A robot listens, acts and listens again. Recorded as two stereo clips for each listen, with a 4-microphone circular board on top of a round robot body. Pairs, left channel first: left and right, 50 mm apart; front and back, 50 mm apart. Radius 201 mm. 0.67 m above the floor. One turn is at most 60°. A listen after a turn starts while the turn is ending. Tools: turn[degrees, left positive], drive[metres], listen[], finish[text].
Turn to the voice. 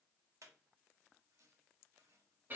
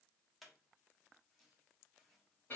Action: listen[]
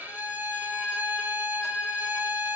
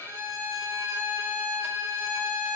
Action: listen[]
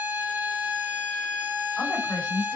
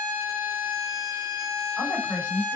Thought: The woman speaking: 50° left.
Action: turn[50]
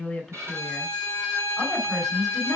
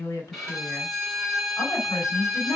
Action: finish[Facing the woman speaking, 1 to 2 m away.]